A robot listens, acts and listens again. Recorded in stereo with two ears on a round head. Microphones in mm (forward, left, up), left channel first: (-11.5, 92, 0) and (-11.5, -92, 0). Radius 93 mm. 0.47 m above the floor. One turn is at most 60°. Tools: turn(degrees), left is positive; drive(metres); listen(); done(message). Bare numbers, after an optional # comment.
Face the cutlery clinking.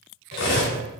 # The cutlery clinking: about 55° left or 125° left.
turn(55)
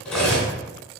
# So it is at 10° left.
turn(10)
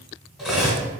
done("Found it: cutlery clinking, straight ahead.")